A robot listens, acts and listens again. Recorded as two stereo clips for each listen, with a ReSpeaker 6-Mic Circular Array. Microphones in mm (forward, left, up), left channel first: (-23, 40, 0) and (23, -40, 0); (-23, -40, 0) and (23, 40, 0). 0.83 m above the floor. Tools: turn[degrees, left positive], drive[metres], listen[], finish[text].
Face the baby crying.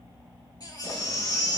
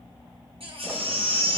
Thought: The baby crying: 70° left.
Action: turn[70]
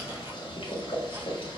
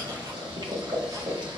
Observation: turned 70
Action: listen[]
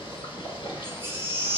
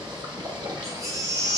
Action: finish[Found it: a baby crying, straight ahead.]